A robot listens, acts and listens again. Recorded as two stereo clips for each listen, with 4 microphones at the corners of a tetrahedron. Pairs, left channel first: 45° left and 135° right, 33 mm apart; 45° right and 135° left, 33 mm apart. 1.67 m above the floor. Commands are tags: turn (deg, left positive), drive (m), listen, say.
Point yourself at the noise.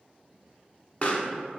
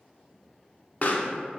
<say>Found it: a pop, straight ahead, under 1 m away.</say>